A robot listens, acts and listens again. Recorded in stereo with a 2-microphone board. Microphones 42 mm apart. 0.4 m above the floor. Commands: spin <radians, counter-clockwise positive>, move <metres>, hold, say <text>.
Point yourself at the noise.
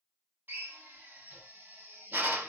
spin -0.87
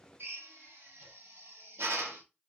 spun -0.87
spin -1.31
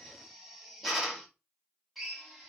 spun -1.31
say Found it: a drill, straight ahead, 1 to 2 m away.